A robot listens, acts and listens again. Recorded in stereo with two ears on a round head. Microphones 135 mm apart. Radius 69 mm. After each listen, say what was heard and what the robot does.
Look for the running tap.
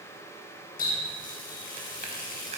The running tap: about 60° left or 120° left. Turn 60° left.
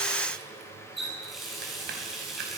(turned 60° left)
Facing the running tap, over 4 m away.